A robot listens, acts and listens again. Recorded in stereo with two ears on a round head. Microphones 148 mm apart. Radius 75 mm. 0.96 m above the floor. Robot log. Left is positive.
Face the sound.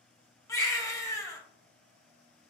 note: The baby crying: about 20° left or 160° left.
cmd yaw +20
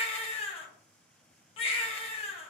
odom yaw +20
note: So it is at 140° left.
cmd yaw +140
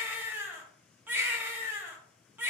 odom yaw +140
note: The baby crying is now 10° right.
cmd yaw -10
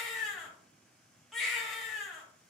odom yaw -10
end: Found it: a baby crying, straight ahead.